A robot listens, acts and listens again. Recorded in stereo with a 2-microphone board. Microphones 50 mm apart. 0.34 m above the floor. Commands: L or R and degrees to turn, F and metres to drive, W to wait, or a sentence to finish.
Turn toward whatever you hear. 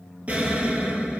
R30
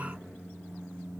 W
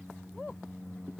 I heard an explosion, but can't make it out now. It was about straight ahead or 120° right.